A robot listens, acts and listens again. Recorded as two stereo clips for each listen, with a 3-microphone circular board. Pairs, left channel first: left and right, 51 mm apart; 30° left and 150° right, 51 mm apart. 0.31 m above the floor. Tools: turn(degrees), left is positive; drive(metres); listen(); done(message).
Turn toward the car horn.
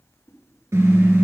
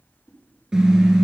turn(degrees=-70)
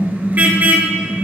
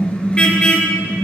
turn(degrees=-35)
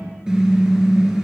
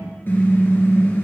turn(degrees=-15)
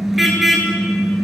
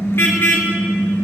done("Found it: a car horn, straight ahead, 2 to 4 m away.")